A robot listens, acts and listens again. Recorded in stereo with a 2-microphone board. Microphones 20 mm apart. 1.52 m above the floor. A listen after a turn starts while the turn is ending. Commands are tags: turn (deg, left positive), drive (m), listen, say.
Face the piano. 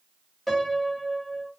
<turn deg="30"/>
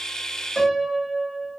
<turn deg="140"/>
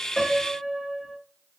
<turn deg="-30"/>
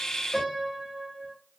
<turn deg="-10"/>
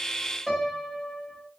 <say>Facing the piano, under 1 m away.</say>